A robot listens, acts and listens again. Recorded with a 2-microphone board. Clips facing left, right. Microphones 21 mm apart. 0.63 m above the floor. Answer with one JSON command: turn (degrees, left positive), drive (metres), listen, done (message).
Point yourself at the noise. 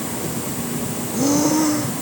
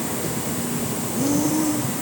{"turn": 45}
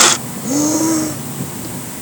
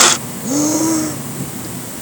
{"done": "Found it: breathing, straight ahead."}